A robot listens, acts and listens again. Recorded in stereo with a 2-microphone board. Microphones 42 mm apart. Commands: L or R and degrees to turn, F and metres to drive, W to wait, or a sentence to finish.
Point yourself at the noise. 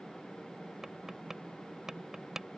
R30
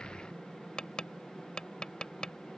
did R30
L20
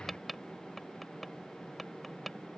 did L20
Facing the tapping.